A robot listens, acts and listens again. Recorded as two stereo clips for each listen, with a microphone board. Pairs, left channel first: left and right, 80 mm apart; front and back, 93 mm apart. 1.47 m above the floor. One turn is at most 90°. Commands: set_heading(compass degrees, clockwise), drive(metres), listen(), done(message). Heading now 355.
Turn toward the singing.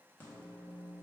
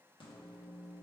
listen()
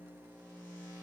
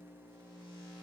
listen()
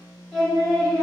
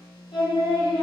set_heading(345)
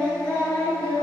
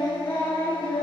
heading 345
set_heading(320)
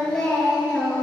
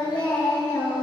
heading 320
set_heading(305)
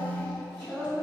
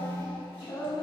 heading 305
set_heading(290)
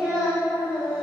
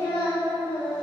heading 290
done("Found it: singing, straight ahead.")